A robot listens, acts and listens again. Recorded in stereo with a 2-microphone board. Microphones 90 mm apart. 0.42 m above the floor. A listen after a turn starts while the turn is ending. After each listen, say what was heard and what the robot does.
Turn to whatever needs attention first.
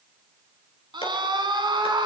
The scream: about 60° right or 120° right. Turn 60° right.
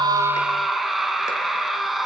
Facing the scream.